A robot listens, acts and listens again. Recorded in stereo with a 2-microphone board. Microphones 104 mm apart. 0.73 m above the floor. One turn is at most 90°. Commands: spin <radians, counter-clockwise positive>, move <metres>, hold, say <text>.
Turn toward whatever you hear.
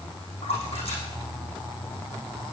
spin 1.57
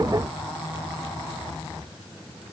say I heard a splash from this way, but can't make it out now.